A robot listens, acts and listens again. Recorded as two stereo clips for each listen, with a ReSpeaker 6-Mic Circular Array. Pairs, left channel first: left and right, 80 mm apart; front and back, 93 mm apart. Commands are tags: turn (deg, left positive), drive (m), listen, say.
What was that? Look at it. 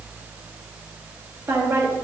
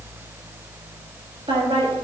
<turn deg="-145"/>
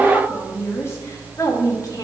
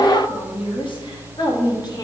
<turn deg="45"/>
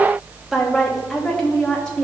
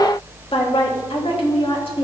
<turn deg="10"/>
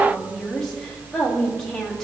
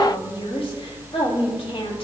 <say>Facing the woman speaking.</say>